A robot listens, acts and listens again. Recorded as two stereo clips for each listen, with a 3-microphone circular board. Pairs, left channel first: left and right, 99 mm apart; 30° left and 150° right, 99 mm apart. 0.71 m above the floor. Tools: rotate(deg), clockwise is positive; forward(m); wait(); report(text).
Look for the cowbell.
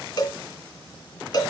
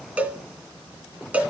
rotate(-135)
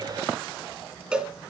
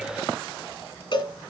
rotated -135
rotate(10)
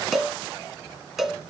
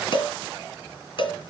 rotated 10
report("Facing the cowbell, 1 to 2 m away.")